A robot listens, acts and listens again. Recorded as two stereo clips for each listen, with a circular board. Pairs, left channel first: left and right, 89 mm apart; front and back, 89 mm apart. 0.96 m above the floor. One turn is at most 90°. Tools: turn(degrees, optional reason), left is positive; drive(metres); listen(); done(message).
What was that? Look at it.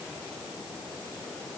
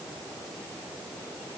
listen()
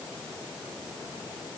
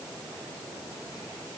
listen()
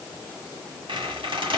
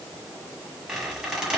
turn(degrees=-90, reason="The squeak: 95° right.")
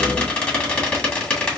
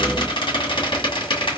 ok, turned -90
turn(degrees=15, reason="The squeak is now 15° left.")
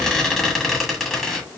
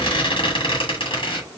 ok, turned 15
done("Facing the squeak.")